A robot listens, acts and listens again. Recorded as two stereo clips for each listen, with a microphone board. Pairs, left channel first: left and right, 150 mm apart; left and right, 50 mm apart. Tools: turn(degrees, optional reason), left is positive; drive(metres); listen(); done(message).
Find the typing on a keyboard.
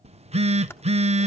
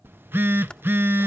turn(degrees=15, reason="The typing on a keyboard: about 15° left or 165° left.")
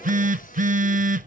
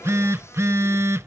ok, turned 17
listen()
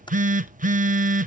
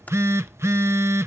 turn(degrees=150, reason="So it is at 150° left.")
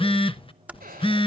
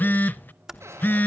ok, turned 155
turn(degrees=-10, reason="The typing on a keyboard is now 10° right.")
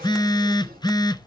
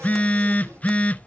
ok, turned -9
listen()
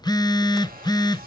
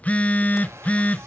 listen()
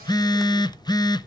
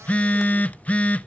done("Facing where the typing on a keyboard came from. I can't hear it now.")